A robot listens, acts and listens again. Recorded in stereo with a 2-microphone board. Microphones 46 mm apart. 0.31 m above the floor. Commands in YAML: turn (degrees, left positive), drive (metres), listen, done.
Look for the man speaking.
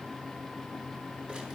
listen: true
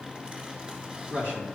turn: -35
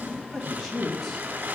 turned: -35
done: "Found it: a man speaking, straight ahead."